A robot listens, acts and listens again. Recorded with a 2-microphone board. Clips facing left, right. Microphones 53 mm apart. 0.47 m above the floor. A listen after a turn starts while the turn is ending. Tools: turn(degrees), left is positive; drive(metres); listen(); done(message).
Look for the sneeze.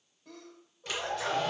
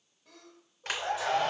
turn(degrees=-30)
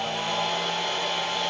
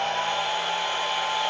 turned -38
listen()
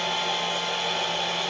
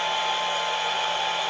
done("I heard a sneeze, but can't make it out now. It was about 35° left or 140° right.")